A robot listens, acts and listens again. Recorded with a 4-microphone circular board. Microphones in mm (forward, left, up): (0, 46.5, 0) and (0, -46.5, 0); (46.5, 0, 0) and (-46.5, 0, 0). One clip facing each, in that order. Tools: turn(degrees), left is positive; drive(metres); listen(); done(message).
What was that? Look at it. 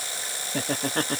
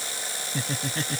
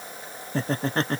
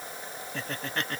turn(degrees=55)
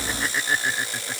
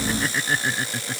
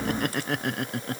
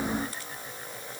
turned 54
done("Found it: laughter, straight ahead.")